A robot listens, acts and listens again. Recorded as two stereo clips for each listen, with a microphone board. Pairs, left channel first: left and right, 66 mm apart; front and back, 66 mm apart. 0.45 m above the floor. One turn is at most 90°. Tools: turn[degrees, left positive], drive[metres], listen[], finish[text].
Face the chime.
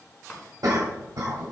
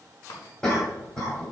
Thought: The chime: 15° left.
Action: turn[15]
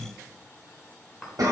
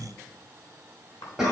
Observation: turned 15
Action: finish[Found it: a chime, straight ahead.]